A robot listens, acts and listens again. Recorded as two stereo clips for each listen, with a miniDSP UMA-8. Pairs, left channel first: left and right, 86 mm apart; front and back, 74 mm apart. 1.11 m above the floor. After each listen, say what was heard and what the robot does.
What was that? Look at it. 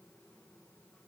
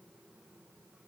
Keep listening.
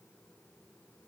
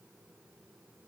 Keep listening.
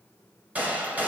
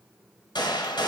The gunshot: 15° right. Turn 15° right.
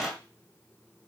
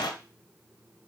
Facing the gunshot.